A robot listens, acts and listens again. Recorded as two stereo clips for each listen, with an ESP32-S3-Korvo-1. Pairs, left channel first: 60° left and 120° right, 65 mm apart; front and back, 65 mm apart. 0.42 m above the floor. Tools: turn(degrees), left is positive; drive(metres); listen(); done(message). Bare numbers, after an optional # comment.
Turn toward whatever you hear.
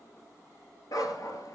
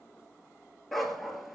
# The dog barking: 90° left.
turn(90)
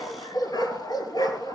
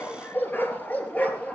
# The dog barking is now 70° left.
turn(70)
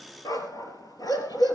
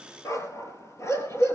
# The dog barking is now 45° left.
turn(45)
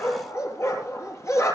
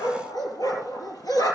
# The dog barking is now 15° left.
turn(15)
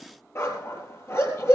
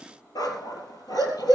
# The dog barking is now 10° left.
turn(10)
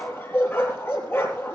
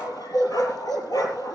done("Found it: a dog barking, straight ahead, 2 to 4 m away.")